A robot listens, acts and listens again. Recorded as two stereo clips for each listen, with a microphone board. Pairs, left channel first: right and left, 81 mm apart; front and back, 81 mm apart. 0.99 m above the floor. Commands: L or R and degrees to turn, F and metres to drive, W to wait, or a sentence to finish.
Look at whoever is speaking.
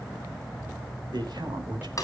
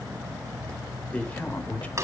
L70
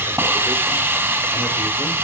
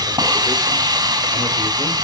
W
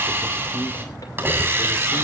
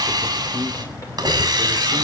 W
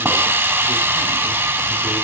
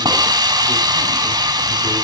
Facing where the man speaking came from. I can't hear it now.